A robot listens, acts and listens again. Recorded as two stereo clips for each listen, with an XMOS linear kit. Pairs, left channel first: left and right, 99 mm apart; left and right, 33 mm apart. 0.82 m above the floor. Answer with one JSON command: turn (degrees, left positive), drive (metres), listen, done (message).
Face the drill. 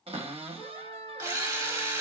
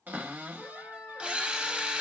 {"turn": -30}
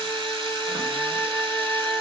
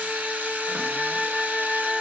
{"turn": -120}
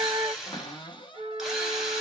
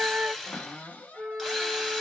{"done": "Facing the drill, 1 to 2 m away."}